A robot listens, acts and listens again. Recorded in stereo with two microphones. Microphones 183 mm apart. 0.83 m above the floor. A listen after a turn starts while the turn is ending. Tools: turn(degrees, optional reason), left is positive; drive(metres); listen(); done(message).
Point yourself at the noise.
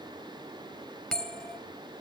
turn(degrees=30)
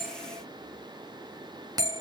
turn(degrees=-25, reason="So it is at 25° right.")
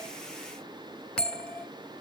done("Facing the bell.")